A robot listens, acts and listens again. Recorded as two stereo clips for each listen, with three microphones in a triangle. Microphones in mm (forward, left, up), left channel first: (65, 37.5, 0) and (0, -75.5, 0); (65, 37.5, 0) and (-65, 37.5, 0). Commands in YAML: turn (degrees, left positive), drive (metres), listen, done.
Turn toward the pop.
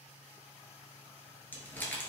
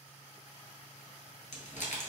listen: true
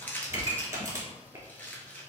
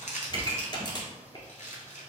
turn: -55
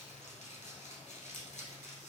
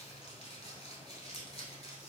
done: "Facing where the pop came from. I can't hear it now."